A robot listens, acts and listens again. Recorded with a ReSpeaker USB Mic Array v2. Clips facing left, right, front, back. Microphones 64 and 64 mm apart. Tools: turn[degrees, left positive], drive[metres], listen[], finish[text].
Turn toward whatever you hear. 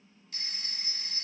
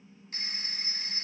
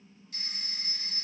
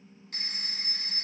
Thought: The phone ringing: 145° right.
Action: turn[-145]
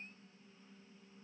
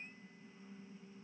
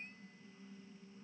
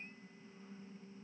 Action: listen[]
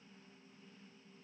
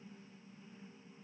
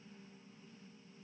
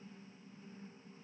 Action: listen[]
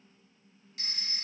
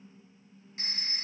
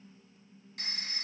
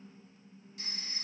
Thought: The phone ringing is now 30° right.
Action: turn[-30]
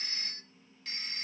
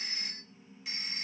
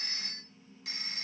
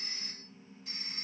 Thought: The phone ringing is now 10° right.
Action: turn[-10]
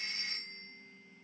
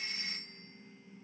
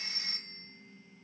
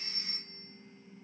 Action: finish[Facing the phone ringing.]